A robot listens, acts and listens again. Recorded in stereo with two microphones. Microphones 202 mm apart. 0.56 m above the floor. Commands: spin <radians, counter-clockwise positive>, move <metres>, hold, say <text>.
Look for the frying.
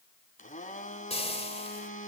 spin 0.52
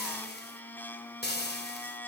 spin 2.09
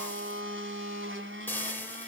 spin 0.17
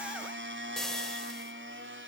say Facing the frying, 2 to 4 m away.